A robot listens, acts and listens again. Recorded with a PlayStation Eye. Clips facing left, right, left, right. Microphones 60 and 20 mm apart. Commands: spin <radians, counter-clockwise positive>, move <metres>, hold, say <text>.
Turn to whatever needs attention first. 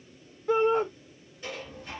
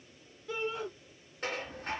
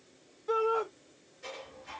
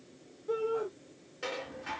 spin 1.05
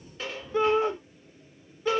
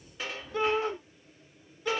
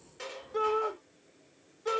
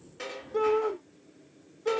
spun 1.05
spin 0.44
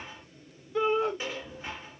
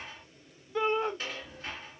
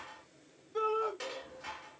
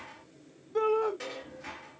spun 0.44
say Facing the shout.